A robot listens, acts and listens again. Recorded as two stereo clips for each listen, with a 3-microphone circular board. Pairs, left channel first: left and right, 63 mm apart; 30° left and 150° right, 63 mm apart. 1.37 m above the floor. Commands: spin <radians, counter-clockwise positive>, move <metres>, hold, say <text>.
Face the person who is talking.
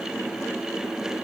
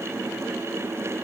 hold
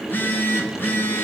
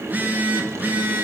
hold
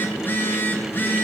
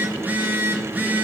say I can't make out anyone speaking, only a phone buzzing.